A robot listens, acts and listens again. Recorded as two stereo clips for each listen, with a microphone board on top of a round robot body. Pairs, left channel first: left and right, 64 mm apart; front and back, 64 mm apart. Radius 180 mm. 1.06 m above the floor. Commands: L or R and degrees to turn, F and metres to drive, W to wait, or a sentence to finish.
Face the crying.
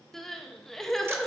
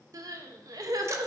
L175
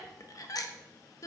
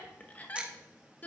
L65
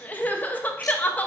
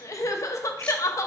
L30
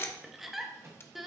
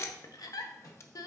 Facing the crying, under 1 m away.